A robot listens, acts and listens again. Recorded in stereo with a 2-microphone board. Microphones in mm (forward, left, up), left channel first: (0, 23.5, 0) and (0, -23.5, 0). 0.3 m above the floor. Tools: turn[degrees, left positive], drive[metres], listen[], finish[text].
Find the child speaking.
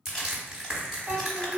Thought: The child speaking: about 45° right or 135° right.
Action: turn[-45]
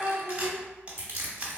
Thought: So it is at 10° right.
Action: turn[-10]
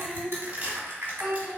Action: finish[Facing the child speaking.]